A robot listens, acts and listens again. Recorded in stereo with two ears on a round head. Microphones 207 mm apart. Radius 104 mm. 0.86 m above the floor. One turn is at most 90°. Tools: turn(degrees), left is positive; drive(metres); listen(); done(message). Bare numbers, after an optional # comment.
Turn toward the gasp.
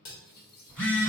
listen()
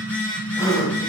# The gasp: about 15° left or 165° left.
turn(15)
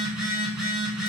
listen()
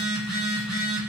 done("I heard a gasp, but can't make it out now. It was about straight ahead or 150° left.")